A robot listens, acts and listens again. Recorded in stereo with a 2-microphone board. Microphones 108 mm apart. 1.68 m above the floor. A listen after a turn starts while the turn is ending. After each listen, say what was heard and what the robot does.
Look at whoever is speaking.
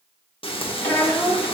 The child speaking: about 15° left or 165° left. Turn 15° left.
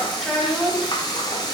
Facing the child speaking, 1 to 2 m away.